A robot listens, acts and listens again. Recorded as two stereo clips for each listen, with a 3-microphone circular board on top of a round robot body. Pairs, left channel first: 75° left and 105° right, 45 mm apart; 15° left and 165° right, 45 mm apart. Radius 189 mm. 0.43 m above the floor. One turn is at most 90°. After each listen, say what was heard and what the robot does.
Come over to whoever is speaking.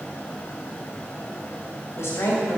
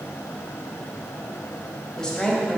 The woman speaking: 90° left. Turn 90° left.
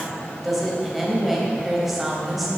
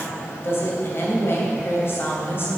The woman speaking is now 20° right. Turn 20° right.
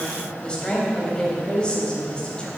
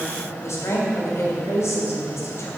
Drive 1.0 m forward.
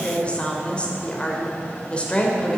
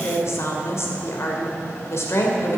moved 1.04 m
The woman speaking is now 10° left. Turn 10° left.
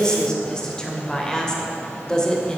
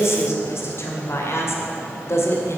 Drive 1.0 m forward.
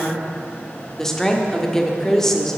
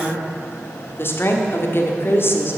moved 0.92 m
Drive 1.0 m forward.
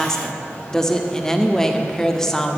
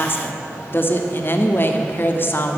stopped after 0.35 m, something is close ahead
Arrived at the woman speaking, straight ahead.